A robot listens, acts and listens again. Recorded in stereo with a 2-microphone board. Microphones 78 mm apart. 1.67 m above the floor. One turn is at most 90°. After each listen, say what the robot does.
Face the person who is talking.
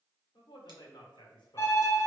Turn 90° left.
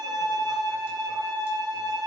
Keep listening.
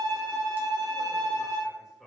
Facing the man speaking.